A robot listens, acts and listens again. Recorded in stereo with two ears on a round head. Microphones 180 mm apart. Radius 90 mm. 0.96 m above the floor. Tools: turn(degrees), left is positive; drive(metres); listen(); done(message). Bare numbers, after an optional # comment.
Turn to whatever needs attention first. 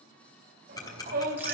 # The shout: about 45° right or 135° right.
turn(-45)
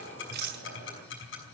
listen()
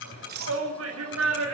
# So it is at 85° right.
turn(-85)
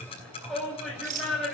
done("Facing the shout.")